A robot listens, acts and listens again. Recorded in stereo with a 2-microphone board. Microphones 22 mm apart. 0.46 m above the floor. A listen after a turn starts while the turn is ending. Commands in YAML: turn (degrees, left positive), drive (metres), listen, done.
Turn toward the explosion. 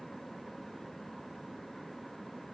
listen: true
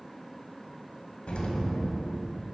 turn: 90
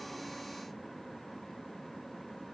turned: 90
done: "I heard an explosion from this way, but can't make it out now."